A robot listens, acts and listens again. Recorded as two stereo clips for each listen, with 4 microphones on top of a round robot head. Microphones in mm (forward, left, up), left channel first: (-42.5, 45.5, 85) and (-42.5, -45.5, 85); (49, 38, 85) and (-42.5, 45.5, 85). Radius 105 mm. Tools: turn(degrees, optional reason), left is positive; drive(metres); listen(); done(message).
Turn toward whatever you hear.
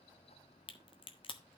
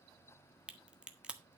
turn(degrees=100, reason="The crack: 100° left.")
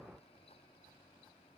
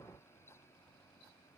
done("I heard a crack from this way, but can't make it out now.")